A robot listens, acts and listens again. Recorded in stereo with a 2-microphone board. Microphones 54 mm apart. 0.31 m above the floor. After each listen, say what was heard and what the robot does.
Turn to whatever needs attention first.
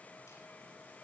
Keep listening.
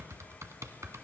Keep listening.
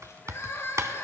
The crying: about 55° left or 125° left. Turn 55° left.
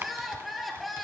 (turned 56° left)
Found it: crying, straight ahead, 2 to 4 m away.